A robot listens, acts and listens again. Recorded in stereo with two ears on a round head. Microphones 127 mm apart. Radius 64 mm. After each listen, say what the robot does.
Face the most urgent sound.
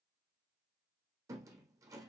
Keep listening.
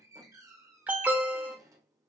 Turn 30° right.
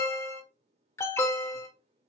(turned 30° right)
Turn 20° left.
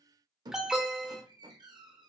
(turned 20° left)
Found it: an alarm, straight ahead.